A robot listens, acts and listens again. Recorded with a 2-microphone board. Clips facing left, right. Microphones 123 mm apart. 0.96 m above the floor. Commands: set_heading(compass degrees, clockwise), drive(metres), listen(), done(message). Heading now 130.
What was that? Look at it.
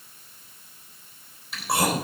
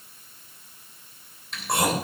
set_heading(100)
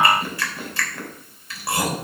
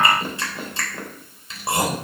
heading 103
set_heading(128)
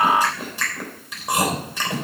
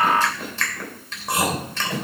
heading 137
set_heading(127)
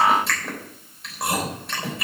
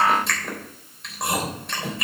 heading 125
done("Facing the chewing, 2 to 4 m away.")